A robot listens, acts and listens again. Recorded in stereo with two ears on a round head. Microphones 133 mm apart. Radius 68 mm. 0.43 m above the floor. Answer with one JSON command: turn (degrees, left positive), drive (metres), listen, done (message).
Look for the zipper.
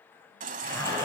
{"turn": 20}
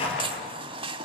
{"turn": 140}
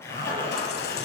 {"turn": 15}
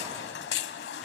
{"listen": true}
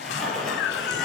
{"done": "Found it: a zipper, straight ahead."}